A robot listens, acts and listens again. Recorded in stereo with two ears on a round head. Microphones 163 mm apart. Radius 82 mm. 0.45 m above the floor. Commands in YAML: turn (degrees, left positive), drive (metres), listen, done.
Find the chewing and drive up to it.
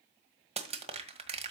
listen: true
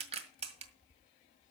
listen: true
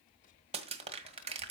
done: "I can't make out chewing, only crushing and tapping."